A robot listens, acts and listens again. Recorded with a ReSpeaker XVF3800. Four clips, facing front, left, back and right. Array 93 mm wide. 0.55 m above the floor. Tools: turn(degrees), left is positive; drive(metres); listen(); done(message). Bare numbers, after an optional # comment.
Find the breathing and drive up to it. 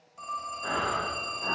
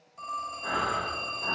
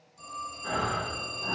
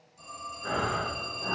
# The breathing: 10° right.
turn(-10)
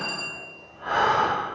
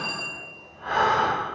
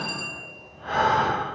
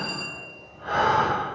drive(1.0)
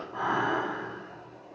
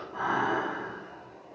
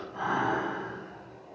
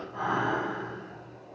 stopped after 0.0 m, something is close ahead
done("Blocked. The breathing is further on, straight ahead.")